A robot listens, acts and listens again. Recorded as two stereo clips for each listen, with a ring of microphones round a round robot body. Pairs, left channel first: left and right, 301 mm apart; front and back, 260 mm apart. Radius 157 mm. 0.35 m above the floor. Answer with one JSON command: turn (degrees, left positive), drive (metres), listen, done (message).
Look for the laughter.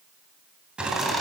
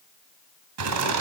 {"turn": 180}
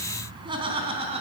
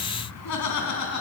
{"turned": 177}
{"turn": -20}
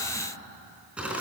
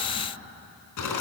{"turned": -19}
{"done": "Facing the laughter, 2 to 4 m away."}